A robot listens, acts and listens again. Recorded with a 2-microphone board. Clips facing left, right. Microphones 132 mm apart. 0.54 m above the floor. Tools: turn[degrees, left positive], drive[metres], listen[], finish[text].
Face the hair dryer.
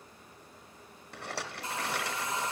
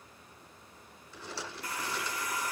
Thought: The hair dryer: about 25° left or 155° left.
Action: turn[25]
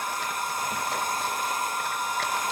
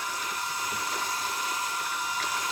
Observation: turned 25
Thought: So it is at 130° left.
Action: turn[130]
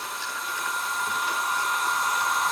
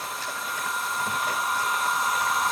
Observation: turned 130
Action: finish[Facing the hair dryer, under 1 m away.]